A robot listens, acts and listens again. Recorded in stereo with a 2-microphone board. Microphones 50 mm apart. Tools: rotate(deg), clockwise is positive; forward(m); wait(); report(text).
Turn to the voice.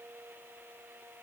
wait()
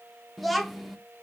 rotate(-30)
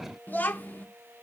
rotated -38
rotate(-140)
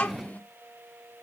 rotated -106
rotate(-35)
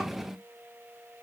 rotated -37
report("Facing the child speaking, 1 to 2 m away.")